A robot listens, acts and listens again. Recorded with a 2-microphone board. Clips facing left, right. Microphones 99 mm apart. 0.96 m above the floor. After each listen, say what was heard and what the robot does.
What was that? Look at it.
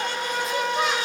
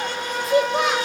The child speaking: about 75° right or 105° right. Turn 75° right.
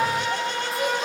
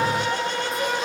Keep listening.
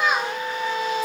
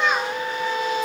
Facing the child speaking, 2 to 4 m away.